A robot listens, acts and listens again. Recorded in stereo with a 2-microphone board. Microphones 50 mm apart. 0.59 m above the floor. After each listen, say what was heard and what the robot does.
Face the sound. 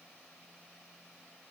Keep listening.
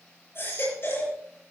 The baby crying: about 50° left or 130° left. Turn 50° left.
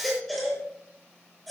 Found it: a baby crying, straight ahead.